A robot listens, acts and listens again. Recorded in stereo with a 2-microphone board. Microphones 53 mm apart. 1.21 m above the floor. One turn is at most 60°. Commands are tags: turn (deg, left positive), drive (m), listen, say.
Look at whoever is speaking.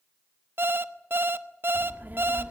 <turn deg="-35"/>
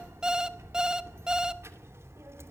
<turn deg="-60"/>
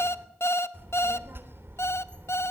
<turn deg="-50"/>
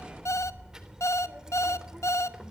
<turn deg="-15"/>
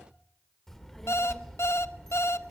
<say>Facing the child speaking.</say>